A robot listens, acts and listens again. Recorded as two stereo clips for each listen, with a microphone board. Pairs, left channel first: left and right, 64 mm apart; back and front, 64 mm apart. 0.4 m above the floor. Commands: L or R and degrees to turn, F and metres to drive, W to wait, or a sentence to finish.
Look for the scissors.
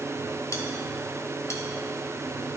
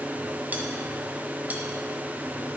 W
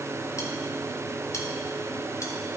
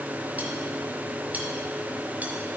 W
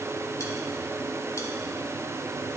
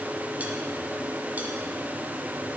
I can't make out scissors to turn to.